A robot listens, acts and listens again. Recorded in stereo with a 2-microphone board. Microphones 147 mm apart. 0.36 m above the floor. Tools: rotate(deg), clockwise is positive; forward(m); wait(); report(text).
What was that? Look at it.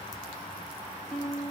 rotate(-30)
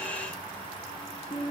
rotate(-150)
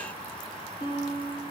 rotate(-35)
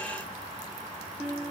report("Facing the guitar.")